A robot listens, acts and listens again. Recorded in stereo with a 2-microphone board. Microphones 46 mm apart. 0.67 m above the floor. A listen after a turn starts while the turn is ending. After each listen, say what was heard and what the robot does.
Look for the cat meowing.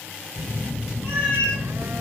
The cat meowing: about 45° left or 135° left. Turn 45° left.
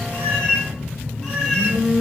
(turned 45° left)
Found it: a cat meowing, straight ahead.